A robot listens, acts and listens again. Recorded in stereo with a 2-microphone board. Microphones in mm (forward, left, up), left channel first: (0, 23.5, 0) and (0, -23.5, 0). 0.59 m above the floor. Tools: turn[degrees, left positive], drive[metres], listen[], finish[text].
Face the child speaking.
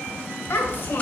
Thought: The child speaking: about 50° left or 130° left.
Action: turn[50]
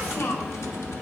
Thought: So it is at 75° left.
Action: turn[75]
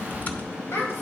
Thought: The child speaking is now 60° left.
Action: turn[60]
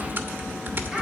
Action: listen[]
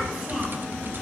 Action: listen[]
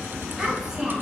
Thought: The child speaking is now 10° right.
Action: turn[-10]
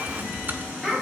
Action: finish[Found it: a child speaking, straight ahead.]